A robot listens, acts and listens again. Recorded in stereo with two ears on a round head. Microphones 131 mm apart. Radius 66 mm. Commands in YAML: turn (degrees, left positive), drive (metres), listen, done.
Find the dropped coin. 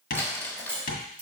turn: -30
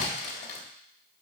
listen: true
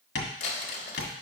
done: "I heard a dropped coin, but can't make it out now. It was about 15° left or 135° right."